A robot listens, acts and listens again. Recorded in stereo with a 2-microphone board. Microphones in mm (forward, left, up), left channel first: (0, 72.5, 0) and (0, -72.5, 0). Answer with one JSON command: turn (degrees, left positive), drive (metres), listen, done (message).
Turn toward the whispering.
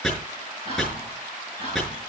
{"turn": -45}
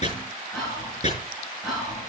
{"done": "Facing the whispering, over 4 m away."}